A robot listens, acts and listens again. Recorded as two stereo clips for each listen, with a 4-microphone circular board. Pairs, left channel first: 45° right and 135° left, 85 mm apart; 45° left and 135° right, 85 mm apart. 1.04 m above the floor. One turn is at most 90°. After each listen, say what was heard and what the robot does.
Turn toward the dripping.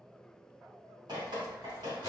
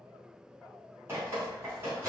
The dripping: 165° left. Turn 90° left.
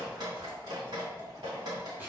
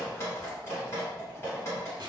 The dripping is now 100° left. Turn 90° left.
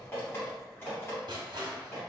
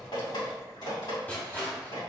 The dripping is now 10° left. Turn 10° left.
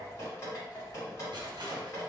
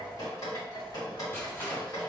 Found it: dripping, straight ahead.